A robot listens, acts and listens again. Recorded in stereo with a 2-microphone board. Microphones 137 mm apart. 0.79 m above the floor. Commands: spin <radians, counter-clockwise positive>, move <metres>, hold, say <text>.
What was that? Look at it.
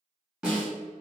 spin -0.52
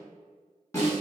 spin 0.44
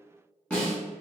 spin 0.17
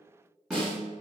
say Facing the snare drum, 1 to 2 m away.